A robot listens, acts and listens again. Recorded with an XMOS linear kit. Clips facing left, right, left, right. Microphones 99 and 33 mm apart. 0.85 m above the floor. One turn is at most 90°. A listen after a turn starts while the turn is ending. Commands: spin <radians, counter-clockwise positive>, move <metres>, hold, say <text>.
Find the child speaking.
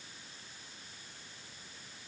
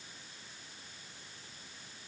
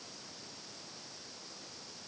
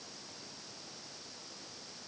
hold
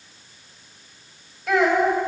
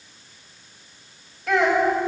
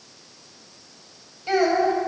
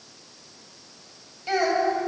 spin 0.52
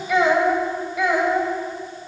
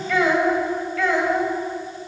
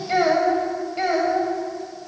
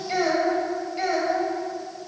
spin 0.52
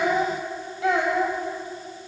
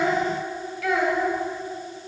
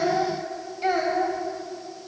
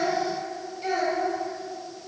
spin 1.57
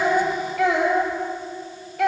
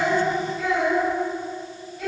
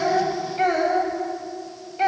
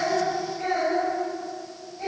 spin 1.40
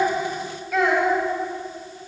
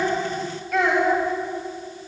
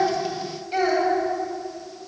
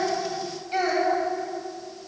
say Found it: a child speaking, straight ahead, 2 to 4 m away.